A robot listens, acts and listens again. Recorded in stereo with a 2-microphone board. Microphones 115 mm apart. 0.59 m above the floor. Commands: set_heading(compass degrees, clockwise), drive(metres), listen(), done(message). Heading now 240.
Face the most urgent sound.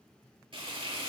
listen()
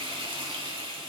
listen()
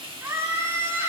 set_heading(260)
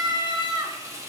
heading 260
set_heading(35)
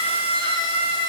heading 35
set_heading(95)
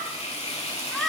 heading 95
done("Found it: a scream, straight ahead, 1 to 2 m away.")